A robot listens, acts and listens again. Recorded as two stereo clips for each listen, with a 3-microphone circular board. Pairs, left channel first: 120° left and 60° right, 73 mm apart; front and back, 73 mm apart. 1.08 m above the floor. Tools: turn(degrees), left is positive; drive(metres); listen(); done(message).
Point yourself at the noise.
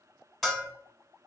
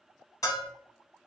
turn(degrees=35)
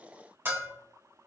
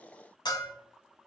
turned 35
done("Facing the bell.")